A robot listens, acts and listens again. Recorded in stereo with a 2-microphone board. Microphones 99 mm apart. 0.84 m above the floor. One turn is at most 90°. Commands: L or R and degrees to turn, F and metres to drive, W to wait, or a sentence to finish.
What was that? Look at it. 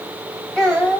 L30
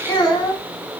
L90
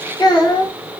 L50
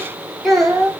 Facing the child speaking, 1 to 2 m away.